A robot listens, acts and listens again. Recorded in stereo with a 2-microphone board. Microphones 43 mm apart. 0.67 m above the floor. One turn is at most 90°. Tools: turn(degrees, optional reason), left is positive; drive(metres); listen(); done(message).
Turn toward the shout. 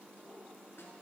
listen()
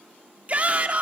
turn(degrees=-35, reason="The shout: about 35° right or 145° right.")
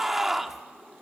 done("Found it: a shout, straight ahead, 1 to 2 m away.")